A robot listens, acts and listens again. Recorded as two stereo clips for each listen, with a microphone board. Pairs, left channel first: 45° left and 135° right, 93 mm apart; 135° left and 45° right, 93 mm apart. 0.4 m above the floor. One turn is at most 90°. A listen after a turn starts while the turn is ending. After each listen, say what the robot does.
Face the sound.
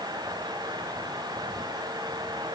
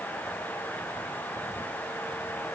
Keep listening.
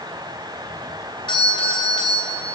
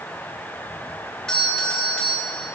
Turn 55° left.
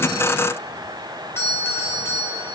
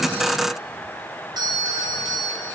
Turn 15° right.
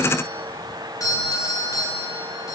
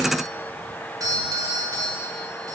Found it: a doorbell, straight ahead.